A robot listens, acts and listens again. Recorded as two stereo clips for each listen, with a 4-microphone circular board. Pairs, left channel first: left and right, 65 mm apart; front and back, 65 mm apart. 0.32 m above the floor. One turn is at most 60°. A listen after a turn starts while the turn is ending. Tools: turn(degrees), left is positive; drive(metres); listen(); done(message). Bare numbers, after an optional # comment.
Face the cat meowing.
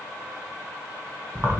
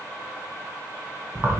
listen()
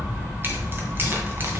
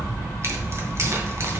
listen()
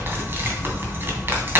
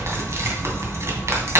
done("I can't make out a cat meowing to turn to.")